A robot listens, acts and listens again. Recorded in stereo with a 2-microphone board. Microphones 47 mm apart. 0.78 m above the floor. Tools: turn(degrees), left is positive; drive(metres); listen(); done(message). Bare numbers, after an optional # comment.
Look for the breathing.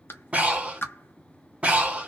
# The breathing: about 25° right or 155° right.
turn(-25)
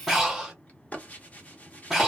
done("Facing the breathing, 1 to 2 m away.")